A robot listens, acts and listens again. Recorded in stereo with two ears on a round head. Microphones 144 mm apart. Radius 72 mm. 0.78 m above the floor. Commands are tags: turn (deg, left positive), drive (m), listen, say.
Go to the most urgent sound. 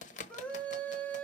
<turn deg="30"/>
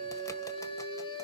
<turn deg="140"/>
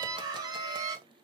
<turn deg="-25"/>
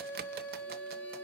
<turn deg="10"/>
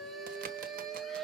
<drive m="1.0"/>
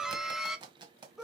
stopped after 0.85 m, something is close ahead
<say>I am next to the scream.</say>